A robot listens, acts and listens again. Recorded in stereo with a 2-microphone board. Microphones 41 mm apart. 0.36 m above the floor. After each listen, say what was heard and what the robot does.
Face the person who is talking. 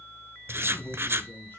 The man speaking: about 55° left or 125° left. Turn 55° left.
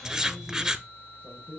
Keep listening.
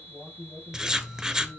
So it is at 45° left. Turn 45° left.
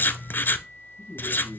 The man speaking is now 10° left. Turn 10° left.
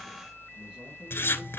Keep listening.
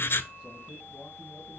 Keep listening.
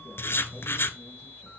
I heard a man speaking from this way, but can't make it out now.